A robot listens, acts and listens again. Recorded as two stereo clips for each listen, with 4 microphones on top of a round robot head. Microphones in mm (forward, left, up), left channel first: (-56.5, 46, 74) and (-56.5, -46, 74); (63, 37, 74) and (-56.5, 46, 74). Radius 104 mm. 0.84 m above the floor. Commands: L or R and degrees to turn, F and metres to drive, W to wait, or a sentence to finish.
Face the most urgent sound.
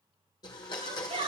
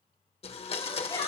R70
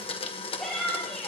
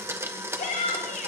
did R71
Found it: a shout, straight ahead.